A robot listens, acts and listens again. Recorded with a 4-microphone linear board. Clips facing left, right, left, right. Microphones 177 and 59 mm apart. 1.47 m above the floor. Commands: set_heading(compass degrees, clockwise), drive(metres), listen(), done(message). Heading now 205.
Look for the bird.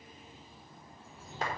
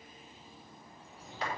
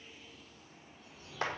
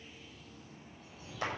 set_heading(235)
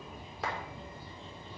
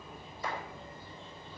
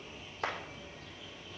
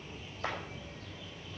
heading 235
set_heading(220)
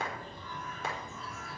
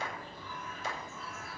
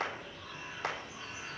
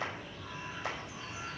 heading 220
done("Facing the bird.")